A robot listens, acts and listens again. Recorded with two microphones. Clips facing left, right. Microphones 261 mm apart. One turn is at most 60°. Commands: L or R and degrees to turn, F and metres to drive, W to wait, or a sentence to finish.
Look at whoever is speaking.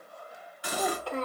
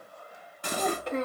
R20
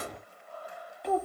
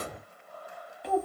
Found it: a child speaking, straight ahead.